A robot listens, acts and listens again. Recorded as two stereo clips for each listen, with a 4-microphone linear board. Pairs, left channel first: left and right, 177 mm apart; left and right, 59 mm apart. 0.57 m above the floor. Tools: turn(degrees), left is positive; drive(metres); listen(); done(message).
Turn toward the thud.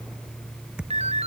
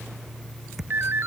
turn(degrees=-30)
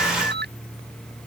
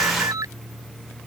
listen()
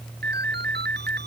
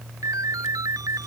done("I heard a thud, but can't make it out now. It was about 25° left or 145° right.")